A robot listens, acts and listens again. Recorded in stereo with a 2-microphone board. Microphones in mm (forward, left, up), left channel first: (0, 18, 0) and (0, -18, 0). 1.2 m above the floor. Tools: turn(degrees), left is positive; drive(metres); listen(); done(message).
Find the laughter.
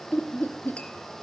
turn(degrees=70)
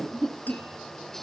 turn(degrees=15)
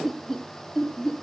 turn(degrees=15)
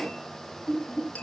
turn(degrees=15)
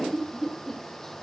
turn(degrees=10)
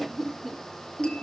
done("Facing the laughter.")